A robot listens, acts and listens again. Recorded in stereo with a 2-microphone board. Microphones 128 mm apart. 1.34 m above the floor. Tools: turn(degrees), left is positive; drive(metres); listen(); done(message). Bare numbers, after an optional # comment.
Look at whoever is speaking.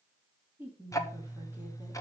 # The woman speaking: about 15° right or 165° right.
turn(-15)
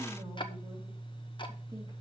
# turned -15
listen()
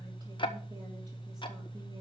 listen()
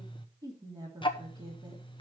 # So it is at 145° right.
turn(-145)
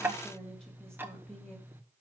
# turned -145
done("Facing the woman speaking.")